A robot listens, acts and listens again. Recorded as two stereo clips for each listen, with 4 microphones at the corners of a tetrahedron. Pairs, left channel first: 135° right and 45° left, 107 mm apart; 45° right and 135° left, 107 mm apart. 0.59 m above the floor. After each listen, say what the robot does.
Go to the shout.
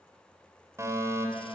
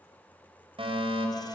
Keep listening.
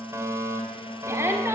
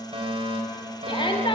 Turn 20° right.
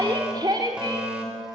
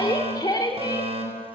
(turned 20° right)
Drive 1.0 m forward.
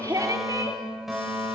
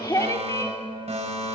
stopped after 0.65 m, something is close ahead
Arrived at the shout, straight ahead.